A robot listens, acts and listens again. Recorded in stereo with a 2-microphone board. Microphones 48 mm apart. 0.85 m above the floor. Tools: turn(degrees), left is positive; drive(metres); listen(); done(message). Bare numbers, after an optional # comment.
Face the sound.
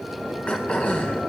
# The throat clearing: about 25° left or 155° left.
turn(25)
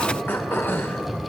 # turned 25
# So it is at 125° left.
turn(125)
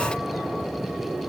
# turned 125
listen()
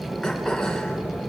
listen()
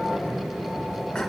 # The throat clearing is now 10° left.
turn(10)
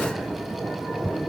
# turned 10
listen()
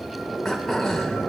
done("Found it: throat clearing, straight ahead.")